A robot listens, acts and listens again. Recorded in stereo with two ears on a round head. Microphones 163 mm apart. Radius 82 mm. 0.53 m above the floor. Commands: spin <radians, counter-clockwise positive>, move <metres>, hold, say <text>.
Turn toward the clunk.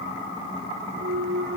spin -0.96
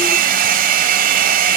hold
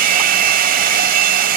say I heard a clunk, but can't make it out now. It was about straight ahead or 70° right.